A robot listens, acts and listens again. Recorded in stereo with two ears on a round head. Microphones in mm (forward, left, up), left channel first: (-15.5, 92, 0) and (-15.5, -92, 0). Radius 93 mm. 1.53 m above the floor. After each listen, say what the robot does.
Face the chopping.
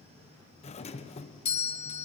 Keep listening.
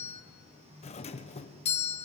Keep listening.
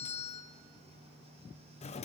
I can't make out chopping, only a doorbell.